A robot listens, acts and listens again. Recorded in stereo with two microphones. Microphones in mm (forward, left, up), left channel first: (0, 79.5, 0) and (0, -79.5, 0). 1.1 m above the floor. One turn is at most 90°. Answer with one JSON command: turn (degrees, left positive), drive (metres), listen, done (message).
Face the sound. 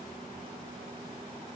{"listen": true}
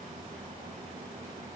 {"listen": true}
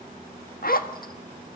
{"turn": 70}
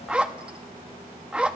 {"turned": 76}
{"done": "Facing the zipper."}